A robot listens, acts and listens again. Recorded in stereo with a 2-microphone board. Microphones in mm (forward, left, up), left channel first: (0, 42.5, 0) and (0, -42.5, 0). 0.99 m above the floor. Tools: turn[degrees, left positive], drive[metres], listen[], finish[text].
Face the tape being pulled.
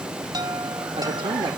Action: listen[]
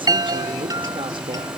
Action: listen[]
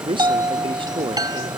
Action: finish[I can't make out tape being pulled, only a chime and a man speaking.]